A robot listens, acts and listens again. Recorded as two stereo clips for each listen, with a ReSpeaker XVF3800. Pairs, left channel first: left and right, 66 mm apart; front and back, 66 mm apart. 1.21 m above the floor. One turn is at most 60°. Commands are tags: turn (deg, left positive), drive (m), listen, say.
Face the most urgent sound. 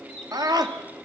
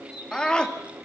<turn deg="-60"/>
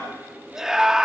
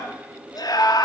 <turn deg="-10"/>
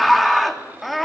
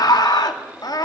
<say>Facing the scream.</say>